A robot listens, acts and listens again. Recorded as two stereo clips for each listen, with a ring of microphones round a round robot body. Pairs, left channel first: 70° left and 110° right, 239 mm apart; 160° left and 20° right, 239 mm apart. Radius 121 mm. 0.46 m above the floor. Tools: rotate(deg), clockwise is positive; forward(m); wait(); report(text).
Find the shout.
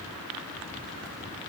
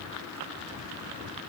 wait()
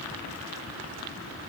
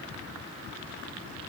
wait()
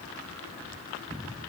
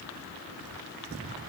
report("I can't make out a shout.")